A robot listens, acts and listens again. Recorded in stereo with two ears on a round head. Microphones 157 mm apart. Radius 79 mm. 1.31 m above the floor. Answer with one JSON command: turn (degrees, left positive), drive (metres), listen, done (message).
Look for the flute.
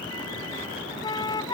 {"turn": 25}
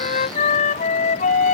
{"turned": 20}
{"turn": 135}
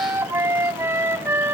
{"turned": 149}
{"turn": -15}
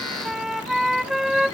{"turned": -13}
{"done": "Facing the flute."}